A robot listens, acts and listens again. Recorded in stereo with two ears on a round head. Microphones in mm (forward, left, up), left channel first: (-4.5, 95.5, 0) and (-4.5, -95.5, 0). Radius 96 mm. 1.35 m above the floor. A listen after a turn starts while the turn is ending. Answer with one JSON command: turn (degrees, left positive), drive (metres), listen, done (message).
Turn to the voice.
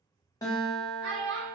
{"turn": -75}
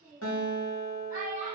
{"turn": -15}
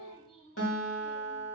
{"listen": true}
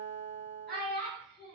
{"done": "Found it: a child speaking, straight ahead, 1 to 2 m away."}